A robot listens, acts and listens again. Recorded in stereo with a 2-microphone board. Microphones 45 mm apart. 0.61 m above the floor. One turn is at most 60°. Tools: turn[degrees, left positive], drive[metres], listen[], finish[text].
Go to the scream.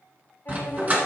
Action: listen[]
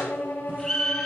Action: turn[30]
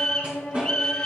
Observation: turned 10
Thought: The scream: about 15° left or 165° left.
Action: turn[15]
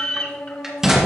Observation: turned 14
Thought: So it is at 145° left.
Action: turn[60]
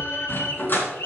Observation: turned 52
Thought: The scream is now 95° left.
Action: turn[60]
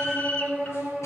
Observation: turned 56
Thought: The scream is now 35° left.
Action: turn[35]
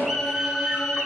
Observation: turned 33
Action: drive[1.0]
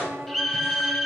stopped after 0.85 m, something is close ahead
Thought: The scream is now 10° left.
Action: turn[10]
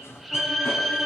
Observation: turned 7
Action: finish[I am next to the scream.]